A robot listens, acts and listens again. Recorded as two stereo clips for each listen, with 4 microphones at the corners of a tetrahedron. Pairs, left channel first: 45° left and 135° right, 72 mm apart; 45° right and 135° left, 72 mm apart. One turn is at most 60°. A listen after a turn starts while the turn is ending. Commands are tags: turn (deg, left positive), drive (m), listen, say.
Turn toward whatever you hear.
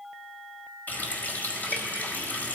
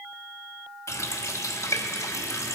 <turn deg="-15"/>
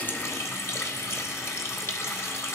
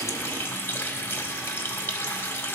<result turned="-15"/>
<say>Found it: a running tap, straight ahead.</say>